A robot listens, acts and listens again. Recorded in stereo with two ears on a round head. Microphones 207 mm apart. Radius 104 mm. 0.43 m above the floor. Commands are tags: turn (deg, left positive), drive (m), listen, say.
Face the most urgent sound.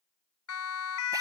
<turn deg="75"/>
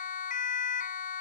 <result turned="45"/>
<turn deg="40"/>
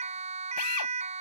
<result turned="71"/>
<turn deg="-30"/>
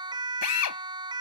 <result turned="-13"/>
<turn deg="-20"/>
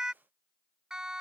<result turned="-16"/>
<say>Facing the siren.</say>